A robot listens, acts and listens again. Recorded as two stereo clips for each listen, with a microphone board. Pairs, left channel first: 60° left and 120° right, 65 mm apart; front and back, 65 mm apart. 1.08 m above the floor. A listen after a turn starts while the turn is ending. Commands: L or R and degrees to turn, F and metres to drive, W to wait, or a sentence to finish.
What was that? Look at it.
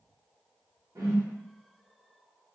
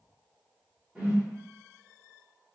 R105
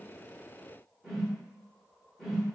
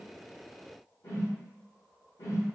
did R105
R35
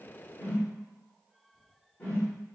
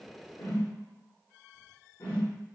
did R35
Facing the whoosh, 1 to 2 m away.